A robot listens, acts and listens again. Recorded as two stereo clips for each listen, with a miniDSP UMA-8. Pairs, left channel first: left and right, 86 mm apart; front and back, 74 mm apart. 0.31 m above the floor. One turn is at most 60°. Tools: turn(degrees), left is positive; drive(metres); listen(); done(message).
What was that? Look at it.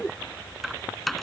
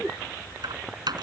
turn(degrees=60)
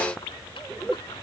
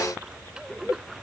turn(degrees=60)
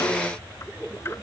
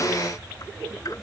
turn(degrees=60)
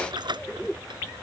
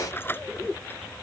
turn(degrees=-60)
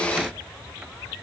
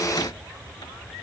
listen()
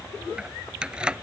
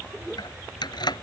turn(degrees=-10)
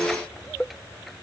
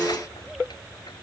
listen()
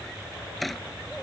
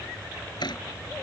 done("Facing the keys jangling.")